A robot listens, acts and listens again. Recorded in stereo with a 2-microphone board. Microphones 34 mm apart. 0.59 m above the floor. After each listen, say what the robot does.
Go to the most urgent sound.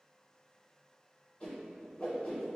Keep listening.
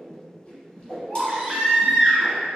Turn 30° right.
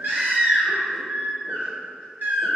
Turn 115° right.
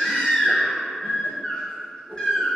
Turn 20° left.
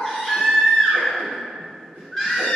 Drive 1.0 m forward.
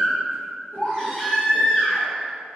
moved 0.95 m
Turn 15° left.
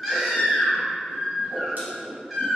Drive 1.0 m forward.
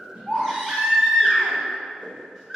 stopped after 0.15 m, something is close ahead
Turn 10° right.
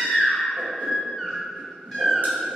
I am next to the baby crying.